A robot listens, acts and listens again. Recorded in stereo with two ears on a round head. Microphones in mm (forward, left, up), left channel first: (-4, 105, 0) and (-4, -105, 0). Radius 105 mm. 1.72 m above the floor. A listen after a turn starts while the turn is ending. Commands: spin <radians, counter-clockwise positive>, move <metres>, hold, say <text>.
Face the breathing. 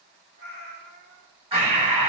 spin -0.44
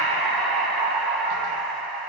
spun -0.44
say Facing the breathing.